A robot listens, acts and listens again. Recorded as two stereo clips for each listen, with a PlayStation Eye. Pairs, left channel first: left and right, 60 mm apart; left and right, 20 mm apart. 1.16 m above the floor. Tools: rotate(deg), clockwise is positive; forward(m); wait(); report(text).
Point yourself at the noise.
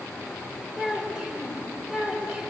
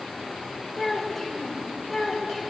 rotate(30)
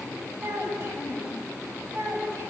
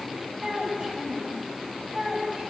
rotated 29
rotate(130)
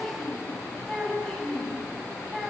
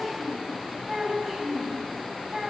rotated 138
rotate(-10)
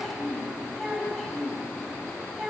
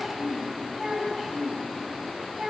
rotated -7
report("Found it: a child speaking, straight ahead, over 4 m away.")